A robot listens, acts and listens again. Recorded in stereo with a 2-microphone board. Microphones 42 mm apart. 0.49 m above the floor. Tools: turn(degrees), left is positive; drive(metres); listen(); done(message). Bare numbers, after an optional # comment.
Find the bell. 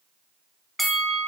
turn(30)
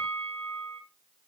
# So it is at 150° left.
turn(150)
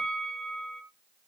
# The bell is now 25° left.
turn(25)
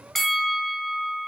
done("Found it: a bell, straight ahead.")